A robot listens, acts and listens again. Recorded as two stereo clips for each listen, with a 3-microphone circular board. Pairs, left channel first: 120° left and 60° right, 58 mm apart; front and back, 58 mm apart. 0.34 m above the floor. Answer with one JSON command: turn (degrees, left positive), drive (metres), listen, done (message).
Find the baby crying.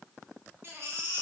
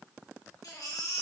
{"turn": -10}
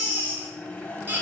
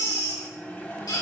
{"done": "Found it: a baby crying, straight ahead."}